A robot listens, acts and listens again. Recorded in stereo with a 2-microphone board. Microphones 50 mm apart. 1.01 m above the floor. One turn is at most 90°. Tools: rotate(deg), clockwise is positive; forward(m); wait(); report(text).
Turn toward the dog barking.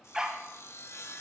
rotate(30)
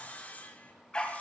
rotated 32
rotate(-20)
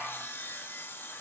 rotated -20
report("Found it: a dog barking, straight ahead, 1 to 2 m away.")